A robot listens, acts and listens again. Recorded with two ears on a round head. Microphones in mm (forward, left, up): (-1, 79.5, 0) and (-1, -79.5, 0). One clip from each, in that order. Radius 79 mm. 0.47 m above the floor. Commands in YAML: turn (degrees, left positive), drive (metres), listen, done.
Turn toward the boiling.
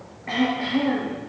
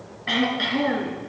listen: true
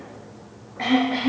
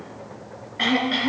listen: true
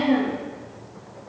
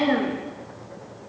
done: "I can't make out boiling, only throat clearing."